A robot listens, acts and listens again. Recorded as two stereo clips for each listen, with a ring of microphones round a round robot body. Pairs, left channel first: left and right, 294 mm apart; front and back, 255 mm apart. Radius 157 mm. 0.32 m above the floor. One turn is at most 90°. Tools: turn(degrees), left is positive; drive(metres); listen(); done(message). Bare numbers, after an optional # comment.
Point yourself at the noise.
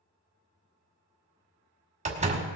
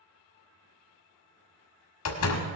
# The door slam: 25° right.
turn(-25)
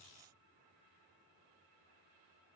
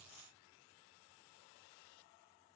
done("Facing where the door slam came from. I can't hear it now.")